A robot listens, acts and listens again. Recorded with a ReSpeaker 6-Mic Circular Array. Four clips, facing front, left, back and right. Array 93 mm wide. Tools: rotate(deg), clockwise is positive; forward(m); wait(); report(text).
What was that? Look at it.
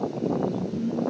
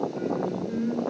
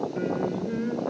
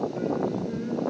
rotate(-180)
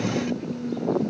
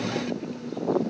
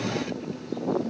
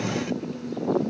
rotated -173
report("Facing the singing, over 4 m away.")